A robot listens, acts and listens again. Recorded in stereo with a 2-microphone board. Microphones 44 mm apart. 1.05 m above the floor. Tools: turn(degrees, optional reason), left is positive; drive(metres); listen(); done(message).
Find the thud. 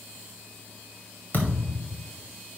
turn(degrees=45, reason="The thud: about 45° left or 135° left.")
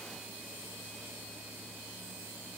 listen()
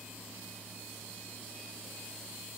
done("I heard a thud, but can't make it out now. It was about straight ahead or 90° left.")